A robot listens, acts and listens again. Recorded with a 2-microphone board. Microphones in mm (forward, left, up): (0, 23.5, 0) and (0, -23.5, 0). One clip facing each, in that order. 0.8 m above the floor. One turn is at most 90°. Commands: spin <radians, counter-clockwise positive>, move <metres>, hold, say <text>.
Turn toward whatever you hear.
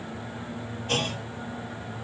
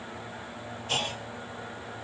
spin 0.87
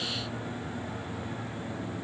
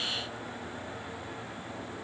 hold
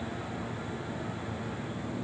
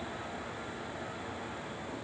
say I heard a clunk, but can't make it out now. It was about straight ahead or 80° left.